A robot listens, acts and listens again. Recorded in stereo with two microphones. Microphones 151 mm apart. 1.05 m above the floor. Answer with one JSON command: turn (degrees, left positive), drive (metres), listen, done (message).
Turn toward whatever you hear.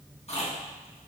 {"turn": 45}
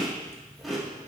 {"done": "Found it: chewing, straight ahead."}